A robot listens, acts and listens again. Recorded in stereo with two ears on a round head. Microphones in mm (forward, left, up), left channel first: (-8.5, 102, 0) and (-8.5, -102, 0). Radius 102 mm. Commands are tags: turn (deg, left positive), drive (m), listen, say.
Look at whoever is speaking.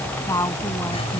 <turn deg="30"/>
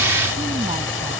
<listen/>
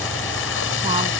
<listen/>
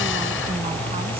<say>I heard a woman speaking, but can't make it out now. It was about 15° right or 135° left.</say>